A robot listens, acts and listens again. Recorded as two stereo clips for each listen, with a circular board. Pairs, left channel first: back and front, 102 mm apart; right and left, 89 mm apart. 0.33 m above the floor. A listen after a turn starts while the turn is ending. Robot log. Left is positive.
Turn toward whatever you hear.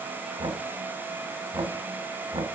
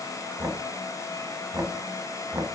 note: The knocking: 35° left.
cmd yaw +35
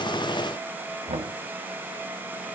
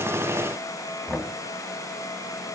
note: The knocking is now 15° right.
cmd yaw -15
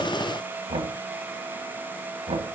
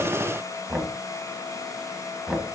end: Facing the knocking, 1 to 2 m away.